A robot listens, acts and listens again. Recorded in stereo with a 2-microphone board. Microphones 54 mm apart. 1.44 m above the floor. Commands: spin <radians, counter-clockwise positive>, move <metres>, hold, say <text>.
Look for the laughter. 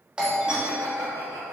spin -1.57
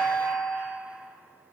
hold
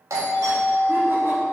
hold
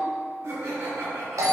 spin -1.05
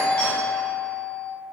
hold
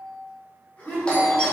spin 0.52
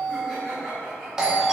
say Facing the laughter, 2 to 4 m away.